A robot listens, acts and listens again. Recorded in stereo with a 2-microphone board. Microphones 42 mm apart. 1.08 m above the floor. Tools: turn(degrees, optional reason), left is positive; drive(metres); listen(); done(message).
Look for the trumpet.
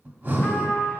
turn(degrees=50, reason="The trumpet: about 50° left or 130° left.")
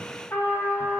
turn(degrees=70, reason="So it is at 70° left.")
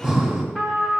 done("Facing the trumpet, 1 to 2 m away.")